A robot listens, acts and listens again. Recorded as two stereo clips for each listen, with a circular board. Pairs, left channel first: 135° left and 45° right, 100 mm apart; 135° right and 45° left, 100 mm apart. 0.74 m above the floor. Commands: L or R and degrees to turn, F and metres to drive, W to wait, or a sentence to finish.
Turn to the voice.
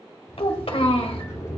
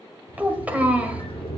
L120
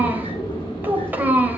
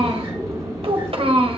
L25
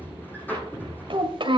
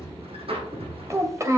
R15
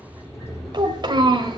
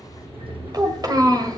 Found it: a child speaking, straight ahead.